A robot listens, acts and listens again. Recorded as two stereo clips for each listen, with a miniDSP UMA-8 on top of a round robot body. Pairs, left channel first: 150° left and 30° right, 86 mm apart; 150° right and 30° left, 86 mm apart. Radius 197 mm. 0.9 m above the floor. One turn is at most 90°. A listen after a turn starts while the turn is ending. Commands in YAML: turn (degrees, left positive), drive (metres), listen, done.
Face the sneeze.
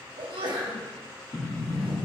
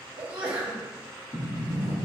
turn: -45
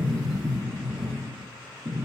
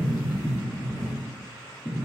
done: "I heard a sneeze from this way, but can't make it out now."